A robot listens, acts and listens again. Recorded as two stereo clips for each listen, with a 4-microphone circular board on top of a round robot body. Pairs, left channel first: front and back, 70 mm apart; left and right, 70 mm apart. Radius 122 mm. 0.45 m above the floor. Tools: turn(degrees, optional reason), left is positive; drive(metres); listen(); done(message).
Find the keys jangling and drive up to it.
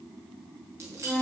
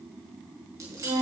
turn(degrees=-130, reason="The keys jangling: 130° right.")
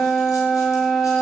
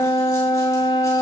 listen()
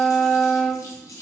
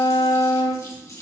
turn(degrees=45, reason="The keys jangling is now 45° left.")
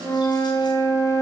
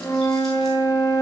listen()
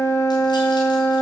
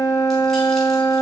listen()
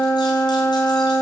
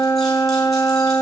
done("Facing where the keys jangling came from. I can't hear it now. I did not reach it.")